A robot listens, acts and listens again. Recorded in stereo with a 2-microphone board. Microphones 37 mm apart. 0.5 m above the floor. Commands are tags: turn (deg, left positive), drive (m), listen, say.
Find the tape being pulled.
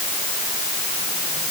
<listen/>
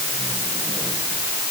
<listen/>
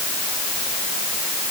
<say>I can't make out tape being pulled.</say>